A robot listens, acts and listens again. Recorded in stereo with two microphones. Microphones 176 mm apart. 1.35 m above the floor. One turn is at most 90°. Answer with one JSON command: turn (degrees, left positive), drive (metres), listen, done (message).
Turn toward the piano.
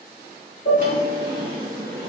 {"turn": 90}
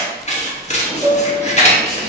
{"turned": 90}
{"done": "Found it: a piano, straight ahead."}